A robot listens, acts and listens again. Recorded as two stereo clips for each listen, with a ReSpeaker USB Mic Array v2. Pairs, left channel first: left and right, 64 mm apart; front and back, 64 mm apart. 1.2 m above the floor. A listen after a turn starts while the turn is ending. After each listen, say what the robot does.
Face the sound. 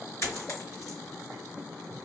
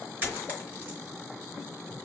Turn 125° left.
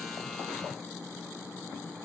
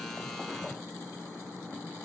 I heard a dropped coin from this way, but can't make it out now.